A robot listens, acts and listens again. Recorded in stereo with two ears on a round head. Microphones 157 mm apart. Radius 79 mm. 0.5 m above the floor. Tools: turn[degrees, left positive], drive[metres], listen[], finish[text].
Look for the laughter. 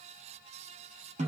Action: listen[]
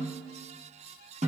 Action: listen[]
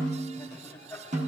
Action: turn[30]
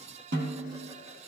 Action: listen[]
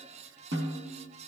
Action: listen[]
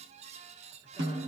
Action: finish[I heard laughter, but can't make it out now. It was about 20° right or 140° left.]